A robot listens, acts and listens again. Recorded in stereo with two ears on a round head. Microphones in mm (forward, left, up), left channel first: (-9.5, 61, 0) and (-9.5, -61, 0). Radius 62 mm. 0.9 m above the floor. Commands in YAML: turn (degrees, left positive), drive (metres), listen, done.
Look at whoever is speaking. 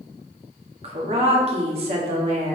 turn: -45
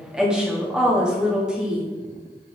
done: "Facing the woman speaking, 1 to 2 m away."